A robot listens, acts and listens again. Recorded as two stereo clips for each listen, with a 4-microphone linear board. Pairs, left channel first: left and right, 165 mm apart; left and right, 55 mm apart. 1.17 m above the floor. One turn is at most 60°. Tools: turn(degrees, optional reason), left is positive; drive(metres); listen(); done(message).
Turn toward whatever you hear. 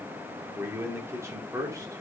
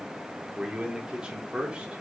turn(degrees=-20, reason="The man speaking: about 20° right or 160° right.")
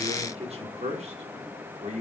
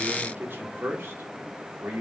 turn(degrees=-60, reason="So it is at 130° right.")
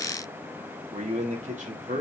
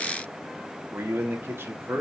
turn(degrees=-50, reason="The man speaking is now 50° right.")
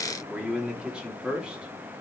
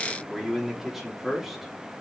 done("Found it: a man speaking, straight ahead.")